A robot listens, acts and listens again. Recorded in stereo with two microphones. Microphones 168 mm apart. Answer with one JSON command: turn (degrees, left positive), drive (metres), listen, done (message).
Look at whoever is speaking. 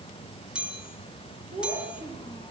{"turn": -35}
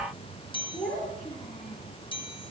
{"done": "Found it: a child speaking, straight ahead."}